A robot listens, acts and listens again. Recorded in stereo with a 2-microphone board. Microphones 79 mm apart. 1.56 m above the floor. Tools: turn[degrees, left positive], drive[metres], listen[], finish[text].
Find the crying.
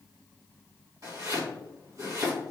Action: listen[]
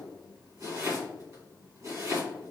Action: listen[]
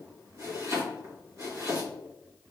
Action: finish[I can't make out crying, only chopping.]